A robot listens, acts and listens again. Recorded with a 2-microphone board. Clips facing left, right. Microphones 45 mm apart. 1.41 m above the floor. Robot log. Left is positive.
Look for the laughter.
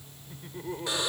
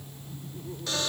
note: The laughter: about 70° left or 110° left.
cmd yaw +70
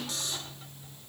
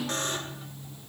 cmd idle
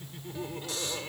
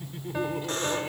note: So it is at 10° right.
cmd yaw -10
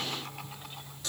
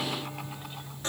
cmd idle
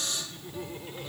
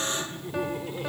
note: The laughter is now 15° right.
cmd yaw -15
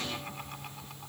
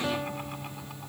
cmd idle
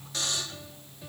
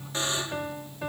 cmd idle
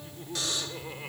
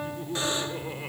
note: The laughter is now 10° right.
cmd yaw -10
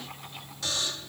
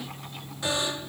cmd idle
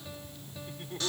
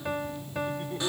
end: Found it: laughter, straight ahead.